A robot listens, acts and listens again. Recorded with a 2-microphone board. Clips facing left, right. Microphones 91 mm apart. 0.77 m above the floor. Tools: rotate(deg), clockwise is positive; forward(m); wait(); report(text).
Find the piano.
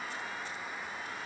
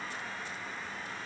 wait()
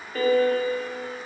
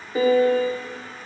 rotate(15)
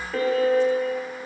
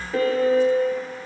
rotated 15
report("Found it: a piano, straight ahead, under 1 m away.")